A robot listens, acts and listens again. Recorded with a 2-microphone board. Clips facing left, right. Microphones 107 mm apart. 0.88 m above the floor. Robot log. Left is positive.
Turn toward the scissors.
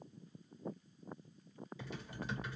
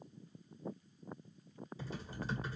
cmd idle
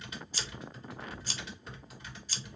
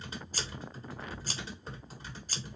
note: The scissors: about 45° right or 135° right.
cmd yaw -45
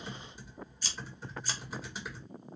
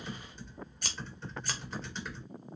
note: So it is at 85° right.
cmd yaw -85
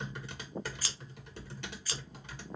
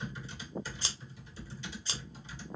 note: The scissors is now 30° right.
cmd yaw -30
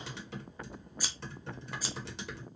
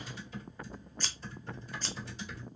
note: The scissors is now 10° left.
cmd yaw +10
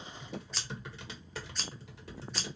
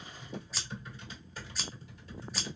end: Found it: scissors, straight ahead, under 1 m away.